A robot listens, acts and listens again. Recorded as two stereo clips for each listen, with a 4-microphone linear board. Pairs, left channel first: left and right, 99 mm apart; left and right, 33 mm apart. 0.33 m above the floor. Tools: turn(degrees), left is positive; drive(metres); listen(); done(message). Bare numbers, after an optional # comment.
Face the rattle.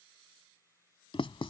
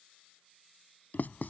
listen()
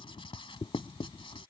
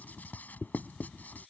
listen()
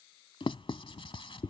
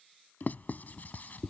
done("I can't make out a rattle, only writing.")